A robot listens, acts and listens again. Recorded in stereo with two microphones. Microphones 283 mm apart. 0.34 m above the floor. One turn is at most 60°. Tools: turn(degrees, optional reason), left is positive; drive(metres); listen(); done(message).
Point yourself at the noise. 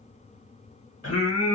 turn(degrees=55, reason="The singing: about 55° left or 125° left.")
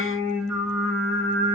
turn(degrees=55, reason="So it is at 55° left.")
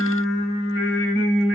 turn(degrees=45, reason="The singing is now 45° left.")
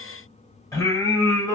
turn(degrees=10, reason="The singing is now 10° left.")
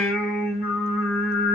done("Facing the singing.")